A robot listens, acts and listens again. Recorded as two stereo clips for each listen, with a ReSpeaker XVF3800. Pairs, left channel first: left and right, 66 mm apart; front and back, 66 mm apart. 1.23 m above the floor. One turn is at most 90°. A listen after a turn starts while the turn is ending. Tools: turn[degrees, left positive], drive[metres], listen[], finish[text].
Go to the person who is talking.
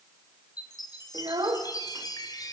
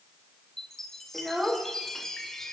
Thought: The child speaking: 100° right.
Action: turn[-90]
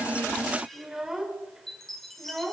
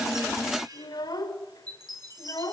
Action: drive[1.0]
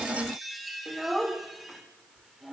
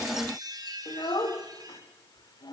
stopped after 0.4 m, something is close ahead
Action: finish[Blocked. The child speaking is further on, straight ahead.]